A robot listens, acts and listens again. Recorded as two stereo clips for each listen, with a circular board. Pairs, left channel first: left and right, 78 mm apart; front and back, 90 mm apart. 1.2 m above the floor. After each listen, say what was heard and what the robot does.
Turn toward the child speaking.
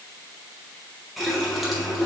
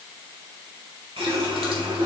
Keep listening.
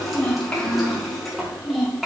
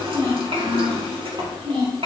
The child speaking: 175° right. Turn 175° right.
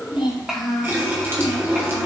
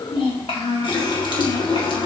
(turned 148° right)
Facing the child speaking.